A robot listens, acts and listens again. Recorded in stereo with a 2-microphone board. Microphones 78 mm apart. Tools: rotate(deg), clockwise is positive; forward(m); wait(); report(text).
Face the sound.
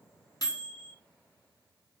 rotate(-50)
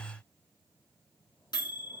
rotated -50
rotate(-70)
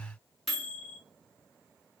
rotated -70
report("Found it: a microwave, straight ahead.")